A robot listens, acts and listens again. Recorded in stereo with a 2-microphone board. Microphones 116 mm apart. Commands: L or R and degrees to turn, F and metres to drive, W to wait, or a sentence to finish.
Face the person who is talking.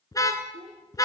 R90
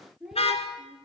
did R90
Found it: a child speaking, straight ahead.